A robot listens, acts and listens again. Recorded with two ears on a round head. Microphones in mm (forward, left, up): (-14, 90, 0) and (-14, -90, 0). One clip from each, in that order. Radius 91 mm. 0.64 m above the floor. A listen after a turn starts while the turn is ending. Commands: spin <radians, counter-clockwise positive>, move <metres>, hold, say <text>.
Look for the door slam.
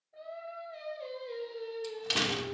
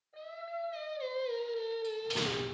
spin 0.96
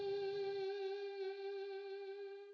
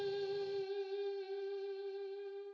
hold
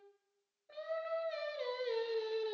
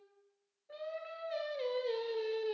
say I heard a door slam, but can't make it out now. It was about straight ahead or 70° left.